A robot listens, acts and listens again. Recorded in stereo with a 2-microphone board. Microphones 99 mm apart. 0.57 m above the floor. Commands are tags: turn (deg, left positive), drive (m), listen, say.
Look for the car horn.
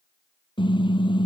<turn deg="55"/>
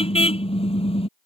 <turn deg="75"/>
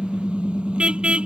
<turn deg="-10"/>
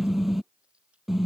<say>Facing the car horn.</say>